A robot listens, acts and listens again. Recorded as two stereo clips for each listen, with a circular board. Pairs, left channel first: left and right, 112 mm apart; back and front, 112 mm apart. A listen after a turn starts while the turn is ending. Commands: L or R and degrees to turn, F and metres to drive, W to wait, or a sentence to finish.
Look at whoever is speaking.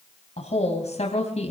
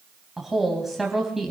L90
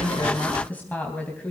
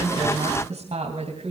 L15
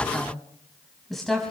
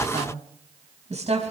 Found it: a woman speaking, straight ahead.